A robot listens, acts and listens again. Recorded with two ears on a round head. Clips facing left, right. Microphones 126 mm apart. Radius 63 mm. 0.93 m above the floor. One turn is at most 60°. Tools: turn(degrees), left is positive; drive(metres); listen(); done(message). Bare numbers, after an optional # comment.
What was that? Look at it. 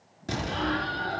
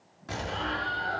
# The explosion: about 40° left or 140° left.
turn(40)
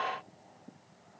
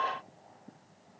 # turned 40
listen()
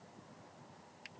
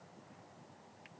done("I heard an explosion, but can't make it out now. It was about straight ahead or 100° left.")